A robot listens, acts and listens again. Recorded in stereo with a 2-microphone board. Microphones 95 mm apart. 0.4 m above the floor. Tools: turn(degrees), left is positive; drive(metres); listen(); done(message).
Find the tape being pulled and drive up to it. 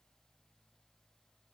listen()
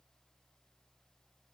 listen()
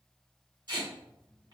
turn(degrees=-50)
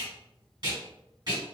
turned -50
turn(degrees=-65)
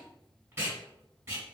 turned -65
turn(degrees=-30)
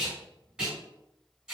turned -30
turn(degrees=-10)
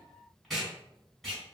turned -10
drive(metres=1.0)
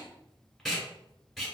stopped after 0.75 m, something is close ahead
done("I am next to the tape being pulled.")